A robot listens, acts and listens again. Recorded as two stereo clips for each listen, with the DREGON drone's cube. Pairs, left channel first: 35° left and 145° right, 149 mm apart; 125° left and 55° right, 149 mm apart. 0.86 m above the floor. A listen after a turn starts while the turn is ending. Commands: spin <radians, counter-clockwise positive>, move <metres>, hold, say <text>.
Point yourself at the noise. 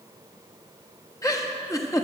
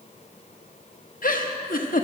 spin 1.75
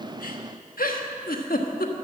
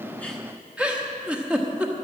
spin 0.44
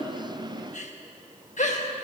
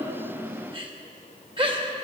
say Found it: a giggle, straight ahead, 1 to 2 m away.